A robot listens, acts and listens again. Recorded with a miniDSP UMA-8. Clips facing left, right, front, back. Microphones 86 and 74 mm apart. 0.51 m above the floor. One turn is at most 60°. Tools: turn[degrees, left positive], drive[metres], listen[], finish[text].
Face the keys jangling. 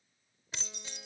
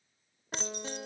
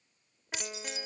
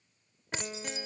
Thought: The keys jangling: 125° right.
Action: turn[-60]
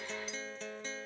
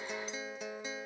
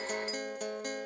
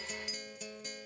Thought: Nothing new. It was at 65° right.
Action: turn[-60]
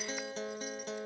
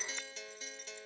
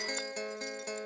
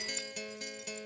Action: listen[]
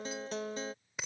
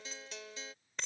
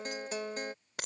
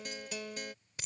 Thought: The keys jangling is now 10° left.
Action: turn[10]
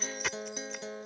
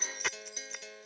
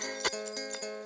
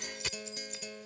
Action: finish[Found it: keys jangling, straight ahead.]